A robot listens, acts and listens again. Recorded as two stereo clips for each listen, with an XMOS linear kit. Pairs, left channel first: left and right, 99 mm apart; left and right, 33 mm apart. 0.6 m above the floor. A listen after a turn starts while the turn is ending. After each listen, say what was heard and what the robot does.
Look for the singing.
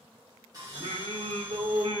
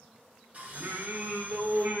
The singing: about 65° right or 115° right. Turn 65° right.
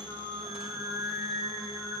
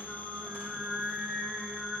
So it is at 65° right. Turn 65° right.
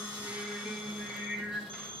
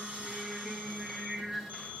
The singing is now 15° right. Turn 15° right.
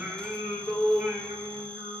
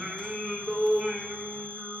The singing is now 10° right. Turn 10° right.
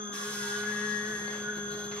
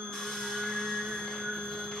Facing the singing, 2 to 4 m away.